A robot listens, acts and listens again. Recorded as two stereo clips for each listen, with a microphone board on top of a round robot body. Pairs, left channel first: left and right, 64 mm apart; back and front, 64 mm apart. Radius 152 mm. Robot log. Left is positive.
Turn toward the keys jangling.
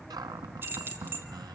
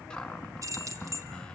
note: The keys jangling: 35° right.
cmd yaw -35
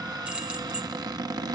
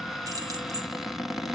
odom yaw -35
note: The keys jangling is now 15° right.
cmd yaw -15
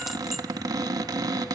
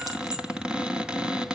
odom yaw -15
cmd idle
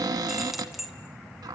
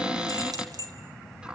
end: Facing the keys jangling, over 4 m away.